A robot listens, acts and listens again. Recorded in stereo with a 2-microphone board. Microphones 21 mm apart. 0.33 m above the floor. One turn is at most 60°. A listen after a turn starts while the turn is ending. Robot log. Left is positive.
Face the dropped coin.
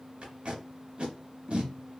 cmd idle
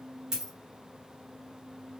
note: The dropped coin: about 25° right or 155° right.
cmd yaw -25
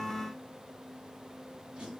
cmd idle
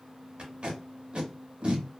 end: I heard a dropped coin, but can't make it out now. It was about straight ahead or 130° right.